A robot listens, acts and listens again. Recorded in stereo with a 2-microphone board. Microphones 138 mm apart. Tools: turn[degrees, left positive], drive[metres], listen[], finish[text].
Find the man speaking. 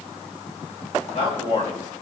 Thought: The man speaking: about 45° left or 135° left.
Action: turn[45]
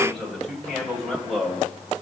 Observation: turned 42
Action: finish[Found it: a man speaking, straight ahead.]